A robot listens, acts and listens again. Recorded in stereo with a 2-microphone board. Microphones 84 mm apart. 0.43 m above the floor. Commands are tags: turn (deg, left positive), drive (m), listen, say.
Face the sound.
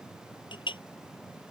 <turn deg="75"/>
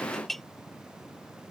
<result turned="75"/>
<say>Found it: a clink, straight ahead.</say>